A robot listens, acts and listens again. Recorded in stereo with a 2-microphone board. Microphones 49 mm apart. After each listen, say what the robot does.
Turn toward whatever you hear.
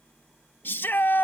Turn 45° left.
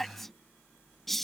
Found it: a shout, straight ahead.